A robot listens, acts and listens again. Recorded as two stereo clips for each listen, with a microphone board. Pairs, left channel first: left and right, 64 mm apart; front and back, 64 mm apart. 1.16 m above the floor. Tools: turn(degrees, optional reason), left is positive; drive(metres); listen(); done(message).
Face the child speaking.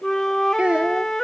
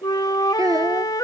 turn(degrees=-160, reason="The child speaking: 160° right.")
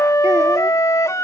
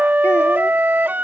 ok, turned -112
turn(degrees=-50, reason="Nothing new. It was at 50° right.")
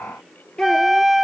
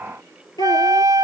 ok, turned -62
turn(degrees=20, reason="The child speaking is now 20° left.")
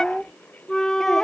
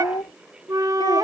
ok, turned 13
done("Found it: a child speaking, straight ahead.")